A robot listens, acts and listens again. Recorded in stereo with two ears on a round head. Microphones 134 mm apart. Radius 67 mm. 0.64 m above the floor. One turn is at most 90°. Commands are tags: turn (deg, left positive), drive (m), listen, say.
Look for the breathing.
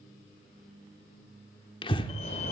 <turn deg="35"/>
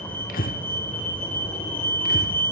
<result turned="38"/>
<turn deg="90"/>
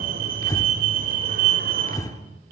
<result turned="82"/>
<turn deg="25"/>
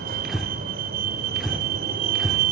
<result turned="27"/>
<say>Found it: breathing, straight ahead, 1 to 2 m away.</say>